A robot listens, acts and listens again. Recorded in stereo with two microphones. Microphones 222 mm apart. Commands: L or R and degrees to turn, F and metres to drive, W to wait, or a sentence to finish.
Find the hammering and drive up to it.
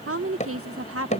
L35
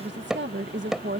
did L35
F1.0
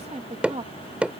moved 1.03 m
F1.0
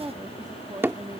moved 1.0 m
R10
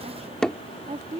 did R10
F1.0
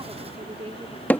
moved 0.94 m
L10
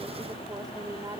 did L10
W
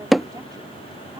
F1.0
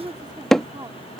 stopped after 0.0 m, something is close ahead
Arrived at the hammering, straight ahead.